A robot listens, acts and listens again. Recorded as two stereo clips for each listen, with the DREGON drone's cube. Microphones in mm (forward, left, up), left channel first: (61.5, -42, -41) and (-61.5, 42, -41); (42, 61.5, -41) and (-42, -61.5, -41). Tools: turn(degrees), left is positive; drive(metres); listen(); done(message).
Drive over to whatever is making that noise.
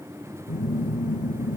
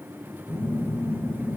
turn(degrees=-20)
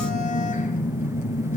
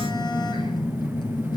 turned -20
drive(metres=1.0)
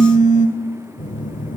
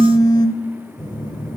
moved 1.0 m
drive(metres=1.0)
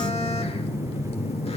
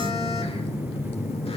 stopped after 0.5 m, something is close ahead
turn(degrees=10)
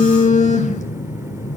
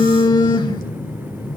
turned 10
done("Arrived at the phone buzzing, straight ahead.")